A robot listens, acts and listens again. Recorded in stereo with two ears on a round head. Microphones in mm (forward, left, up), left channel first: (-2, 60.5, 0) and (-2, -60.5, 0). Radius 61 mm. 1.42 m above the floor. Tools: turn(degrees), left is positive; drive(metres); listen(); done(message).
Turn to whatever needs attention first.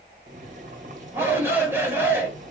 turn(degrees=-15)
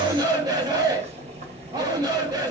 turn(degrees=-150)
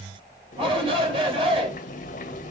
turn(degrees=-45)
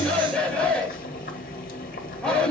done("Found it: a shout, straight ahead.")